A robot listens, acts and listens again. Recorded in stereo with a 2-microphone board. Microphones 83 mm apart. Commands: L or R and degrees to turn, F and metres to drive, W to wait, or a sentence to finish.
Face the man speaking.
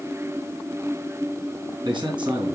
R70
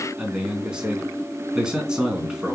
R10
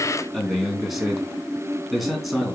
Facing the man speaking.